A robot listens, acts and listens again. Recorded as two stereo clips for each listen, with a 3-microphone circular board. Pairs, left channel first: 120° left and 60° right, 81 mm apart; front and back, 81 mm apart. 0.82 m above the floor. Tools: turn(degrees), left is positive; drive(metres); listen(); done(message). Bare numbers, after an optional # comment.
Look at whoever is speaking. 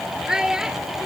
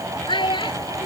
# The child speaking: 25° left.
turn(25)
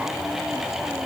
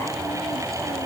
listen()
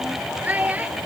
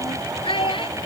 # The child speaking is now 10° left.
turn(10)
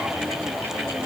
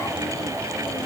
listen()
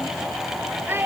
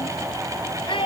done("Found it: a child speaking, straight ahead.")